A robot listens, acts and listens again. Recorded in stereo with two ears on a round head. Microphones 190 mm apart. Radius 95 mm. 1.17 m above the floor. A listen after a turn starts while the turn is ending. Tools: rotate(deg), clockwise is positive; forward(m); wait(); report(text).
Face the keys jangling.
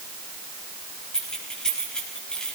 rotate(-30)
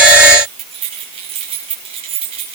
rotate(30)
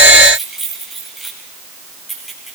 report("Facing the keys jangling.")